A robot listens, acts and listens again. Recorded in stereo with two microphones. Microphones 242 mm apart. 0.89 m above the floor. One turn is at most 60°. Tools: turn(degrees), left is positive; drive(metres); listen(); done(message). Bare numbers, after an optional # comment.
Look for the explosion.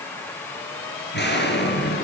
# The explosion: about 50° left or 130° left.
turn(50)
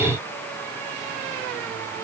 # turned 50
listen()
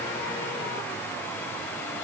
done("I heard an explosion, but can't make it out now. It was about straight ahead or 80° left.")